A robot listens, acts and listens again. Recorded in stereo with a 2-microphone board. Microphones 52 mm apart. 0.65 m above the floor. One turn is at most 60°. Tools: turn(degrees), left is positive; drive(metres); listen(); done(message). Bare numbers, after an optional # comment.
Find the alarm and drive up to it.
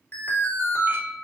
# The alarm: about 40° left or 140° left.
turn(40)
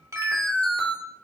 # So it is at 10° left.
turn(10)
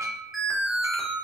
drive(1.0)
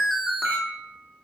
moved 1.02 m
drive(1.0)
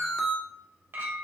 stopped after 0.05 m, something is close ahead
# The alarm is now 10° left.
turn(10)
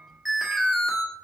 done("Arrived at the alarm, straight ahead.")